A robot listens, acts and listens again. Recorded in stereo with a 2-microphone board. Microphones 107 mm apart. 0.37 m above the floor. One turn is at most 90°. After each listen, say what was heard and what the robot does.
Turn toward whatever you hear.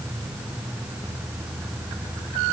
Keep listening.
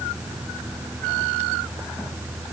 Keep listening.
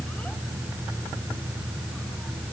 I can't make out anything to turn to.